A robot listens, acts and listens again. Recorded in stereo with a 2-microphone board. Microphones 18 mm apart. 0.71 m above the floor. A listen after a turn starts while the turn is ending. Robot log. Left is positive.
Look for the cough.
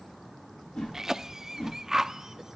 note: The cough: about 25° right or 155° right.
cmd yaw -25
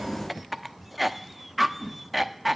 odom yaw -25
end: Found it: a cough, straight ahead, under 1 m away.